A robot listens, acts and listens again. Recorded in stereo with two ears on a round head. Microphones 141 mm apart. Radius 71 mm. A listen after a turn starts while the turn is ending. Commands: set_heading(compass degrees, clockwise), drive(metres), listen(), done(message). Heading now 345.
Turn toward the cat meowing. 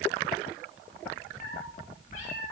set_heading(295)
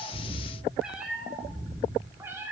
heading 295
set_heading(315)
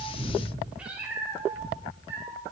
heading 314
set_heading(334)
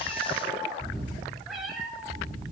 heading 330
done("Found it: a cat meowing, straight ahead.")